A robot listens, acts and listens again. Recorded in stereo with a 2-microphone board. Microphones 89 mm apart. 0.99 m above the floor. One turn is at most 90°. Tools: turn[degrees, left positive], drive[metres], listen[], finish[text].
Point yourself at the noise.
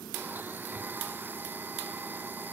Thought: The blender: about 25° right or 155° right.
Action: turn[-25]
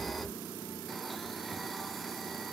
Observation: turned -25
Action: listen[]
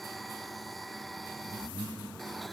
Action: finish[Found it: a blender, straight ahead.]